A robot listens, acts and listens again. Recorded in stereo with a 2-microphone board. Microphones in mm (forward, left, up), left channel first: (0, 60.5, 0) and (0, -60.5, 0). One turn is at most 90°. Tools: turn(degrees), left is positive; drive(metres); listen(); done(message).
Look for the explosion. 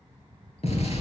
turn(degrees=65)
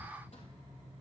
listen()
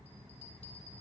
done("I heard an explosion, but can't make it out now. It was about straight ahead or 50° left.")